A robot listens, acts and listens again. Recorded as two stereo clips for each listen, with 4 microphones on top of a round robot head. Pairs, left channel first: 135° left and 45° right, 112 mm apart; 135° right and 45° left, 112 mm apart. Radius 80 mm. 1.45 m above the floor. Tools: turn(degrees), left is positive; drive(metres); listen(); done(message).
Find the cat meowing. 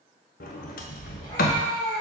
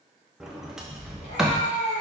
turn(degrees=-165)
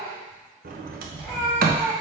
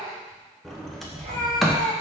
turn(degrees=35)
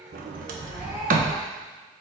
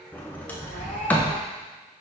turn(degrees=30)
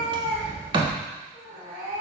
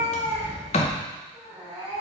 turn(degrees=-10)
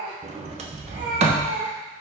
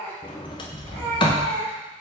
done("Facing the cat meowing, 2 to 4 m away.")